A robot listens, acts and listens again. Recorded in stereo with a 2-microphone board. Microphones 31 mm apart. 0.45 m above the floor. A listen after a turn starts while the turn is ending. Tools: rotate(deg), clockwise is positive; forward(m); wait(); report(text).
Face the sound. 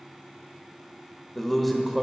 rotate(-30)
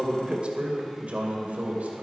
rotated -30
rotate(55)
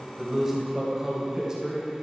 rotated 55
rotate(20)
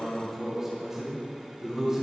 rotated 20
rotate(15)
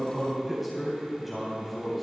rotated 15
report("Facing the man speaking, 2 to 4 m away.")